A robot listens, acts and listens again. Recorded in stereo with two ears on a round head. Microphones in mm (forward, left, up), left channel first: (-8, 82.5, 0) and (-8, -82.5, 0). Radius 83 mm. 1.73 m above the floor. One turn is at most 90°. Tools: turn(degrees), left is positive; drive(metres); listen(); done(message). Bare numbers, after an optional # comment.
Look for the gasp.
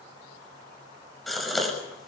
turn(30)
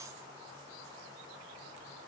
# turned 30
listen()
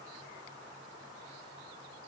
done("I heard a gasp, but can't make it out now. It was about 30° right or 150° left.")